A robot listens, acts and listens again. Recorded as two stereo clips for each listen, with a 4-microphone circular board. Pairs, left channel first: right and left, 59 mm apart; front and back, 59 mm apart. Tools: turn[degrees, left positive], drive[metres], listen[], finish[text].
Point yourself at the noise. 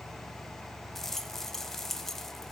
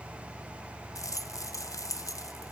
Action: finish[Facing the rattle, 1 to 2 m away.]